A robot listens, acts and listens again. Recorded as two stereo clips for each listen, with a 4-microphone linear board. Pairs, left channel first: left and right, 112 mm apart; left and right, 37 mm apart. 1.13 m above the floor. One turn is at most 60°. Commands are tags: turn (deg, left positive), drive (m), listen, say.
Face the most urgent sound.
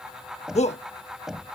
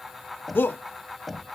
<turn deg="60"/>
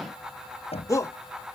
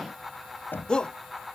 <turn deg="30"/>
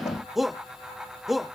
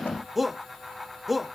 <say>Facing the shout.</say>